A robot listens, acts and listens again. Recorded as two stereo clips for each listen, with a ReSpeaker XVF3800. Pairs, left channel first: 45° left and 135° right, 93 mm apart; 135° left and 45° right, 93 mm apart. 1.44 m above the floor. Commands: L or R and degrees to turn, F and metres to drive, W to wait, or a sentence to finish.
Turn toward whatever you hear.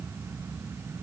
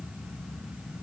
W
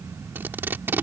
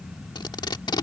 L160
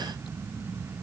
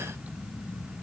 W
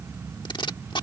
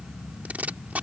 L25
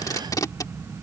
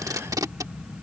Found it: tape being pulled, straight ahead.